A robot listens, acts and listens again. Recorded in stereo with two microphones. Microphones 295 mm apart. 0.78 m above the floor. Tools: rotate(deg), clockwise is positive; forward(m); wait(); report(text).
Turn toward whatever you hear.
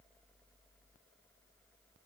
wait()
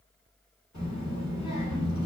rotate(-70)
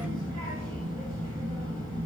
rotate(-30)
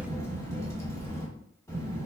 rotate(-10)
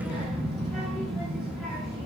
report("Found it: a child speaking, straight ahead, 1 to 2 m away.")